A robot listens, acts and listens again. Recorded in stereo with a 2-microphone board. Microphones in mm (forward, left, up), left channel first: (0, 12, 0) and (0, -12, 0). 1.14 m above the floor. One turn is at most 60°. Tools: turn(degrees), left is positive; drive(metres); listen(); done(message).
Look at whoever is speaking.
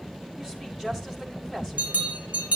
turn(degrees=-20)
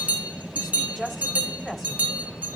done("Facing the woman speaking, over 4 m away.")